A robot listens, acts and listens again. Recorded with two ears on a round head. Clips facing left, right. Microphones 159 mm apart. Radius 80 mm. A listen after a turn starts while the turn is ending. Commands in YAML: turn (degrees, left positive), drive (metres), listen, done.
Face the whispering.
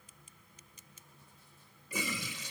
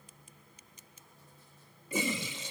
listen: true
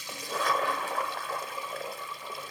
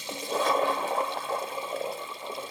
listen: true
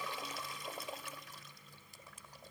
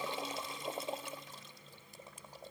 done: "I can't make out whispering to turn to."